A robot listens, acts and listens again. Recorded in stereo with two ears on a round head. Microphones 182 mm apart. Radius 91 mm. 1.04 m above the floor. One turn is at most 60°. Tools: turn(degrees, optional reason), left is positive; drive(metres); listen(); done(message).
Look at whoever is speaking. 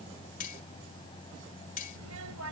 turn(degrees=-60)
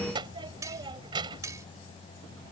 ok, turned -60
turn(degrees=-20, reason="So it is at 20° right.")
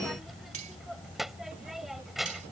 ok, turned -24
done("Found it: a child speaking, straight ahead.")